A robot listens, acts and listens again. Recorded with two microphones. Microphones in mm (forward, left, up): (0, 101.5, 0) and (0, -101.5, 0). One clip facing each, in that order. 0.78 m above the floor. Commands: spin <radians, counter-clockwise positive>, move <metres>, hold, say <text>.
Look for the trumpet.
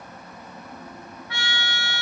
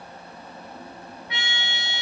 spin -0.35
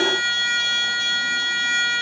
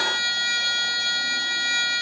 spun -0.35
spin -2.44
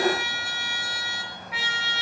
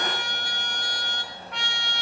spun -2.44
say Facing the trumpet, under 1 m away.